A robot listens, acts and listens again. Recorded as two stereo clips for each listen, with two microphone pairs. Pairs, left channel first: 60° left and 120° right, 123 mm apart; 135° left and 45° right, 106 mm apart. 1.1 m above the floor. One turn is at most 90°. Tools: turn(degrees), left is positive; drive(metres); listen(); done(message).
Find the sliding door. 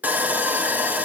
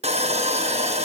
listen()
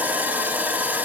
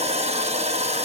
listen()
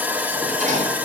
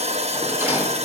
turn(degrees=-90)
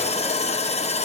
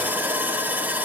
turn(degrees=-25)
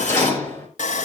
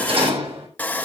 turn(degrees=-10)
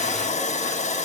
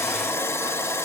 listen()
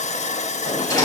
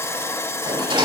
done("Facing the sliding door, over 4 m away.")